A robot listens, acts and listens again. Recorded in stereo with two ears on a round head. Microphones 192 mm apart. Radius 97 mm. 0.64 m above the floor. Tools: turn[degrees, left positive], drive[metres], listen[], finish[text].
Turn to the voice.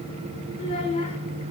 Thought: The child speaking: about 30° left or 150° left.
Action: turn[30]
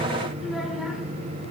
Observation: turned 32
Action: listen[]
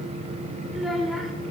Action: finish[Found it: a child speaking, straight ahead.]